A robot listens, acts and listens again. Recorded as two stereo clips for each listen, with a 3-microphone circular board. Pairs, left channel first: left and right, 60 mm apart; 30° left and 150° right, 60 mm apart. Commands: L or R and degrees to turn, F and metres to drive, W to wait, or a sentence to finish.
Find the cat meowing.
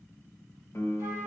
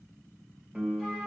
W
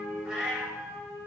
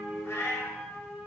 R10
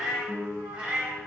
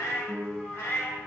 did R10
R20
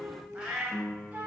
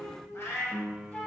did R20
R15
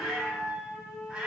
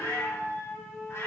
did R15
Found it: a cat meowing, straight ahead.